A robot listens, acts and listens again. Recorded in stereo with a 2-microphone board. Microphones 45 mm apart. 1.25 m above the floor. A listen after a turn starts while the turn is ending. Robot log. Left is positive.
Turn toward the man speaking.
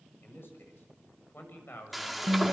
note: The man speaking: about 65° left or 115° left.
cmd yaw +65
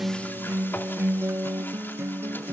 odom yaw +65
cmd idle
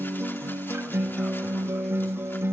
cmd idle
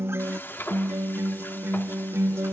end: I heard a man speaking, but can't make it out now. It was about straight ahead or 50° left.